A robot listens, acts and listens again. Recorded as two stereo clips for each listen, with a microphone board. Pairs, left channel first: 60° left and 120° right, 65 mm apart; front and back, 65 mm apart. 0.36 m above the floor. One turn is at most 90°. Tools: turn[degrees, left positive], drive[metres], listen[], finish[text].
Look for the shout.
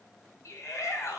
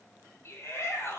Thought: The shout: 35° left.
Action: turn[35]
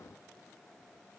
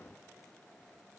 Action: listen[]
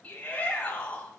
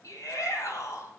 Action: finish[Facing the shout, 2 to 4 m away.]